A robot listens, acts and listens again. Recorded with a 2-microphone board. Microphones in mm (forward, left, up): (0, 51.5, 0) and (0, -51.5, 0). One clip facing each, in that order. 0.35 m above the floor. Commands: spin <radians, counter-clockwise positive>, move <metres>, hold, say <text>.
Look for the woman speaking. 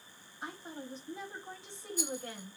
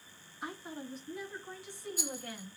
spin 0.44
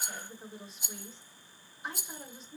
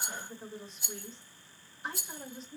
say Found it: a woman speaking, straight ahead, 1 to 2 m away.